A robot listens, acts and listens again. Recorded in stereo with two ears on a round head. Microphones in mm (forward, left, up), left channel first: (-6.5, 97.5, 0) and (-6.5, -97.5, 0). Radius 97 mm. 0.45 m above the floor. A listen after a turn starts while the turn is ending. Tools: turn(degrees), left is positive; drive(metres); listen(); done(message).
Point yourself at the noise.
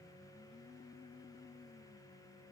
listen()
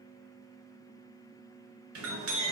turn(degrees=-75)
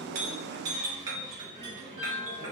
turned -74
turn(degrees=-20)
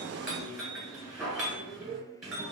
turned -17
done("Facing the clink.")